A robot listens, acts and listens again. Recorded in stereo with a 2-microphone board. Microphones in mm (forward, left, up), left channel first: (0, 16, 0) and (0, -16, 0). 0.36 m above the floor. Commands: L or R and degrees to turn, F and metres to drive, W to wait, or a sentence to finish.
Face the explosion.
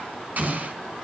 R50
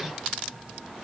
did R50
W
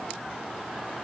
I heard an explosion, but can't make it out now. It was about straight ahead or 80° right.